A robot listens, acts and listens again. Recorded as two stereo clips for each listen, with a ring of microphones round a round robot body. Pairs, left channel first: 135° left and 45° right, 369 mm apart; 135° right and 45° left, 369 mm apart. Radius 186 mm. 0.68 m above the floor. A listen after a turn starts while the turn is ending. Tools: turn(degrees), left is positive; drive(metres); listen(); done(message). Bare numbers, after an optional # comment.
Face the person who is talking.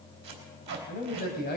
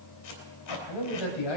# The man speaking: 160° right.
turn(-160)
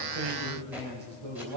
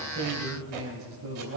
# The man speaking is now 10° right.
turn(-10)
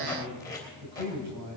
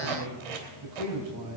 done("Facing the man speaking, 2 to 4 m away.")